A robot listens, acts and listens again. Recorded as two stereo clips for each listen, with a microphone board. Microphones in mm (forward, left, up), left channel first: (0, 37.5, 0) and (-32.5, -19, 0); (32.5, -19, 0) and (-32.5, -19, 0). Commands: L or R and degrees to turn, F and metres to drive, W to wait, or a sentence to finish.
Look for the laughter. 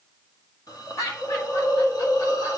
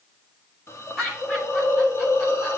L85
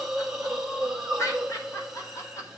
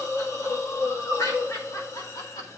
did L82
L20
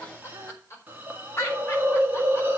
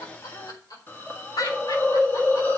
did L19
L10
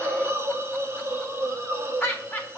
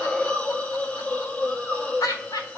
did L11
Facing the laughter.